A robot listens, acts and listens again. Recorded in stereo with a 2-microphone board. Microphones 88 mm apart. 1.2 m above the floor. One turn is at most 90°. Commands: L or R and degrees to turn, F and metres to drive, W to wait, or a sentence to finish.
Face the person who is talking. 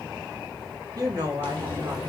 R50
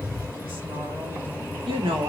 R85
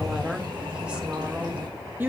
R20
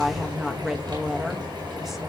Facing the woman speaking, 1 to 2 m away.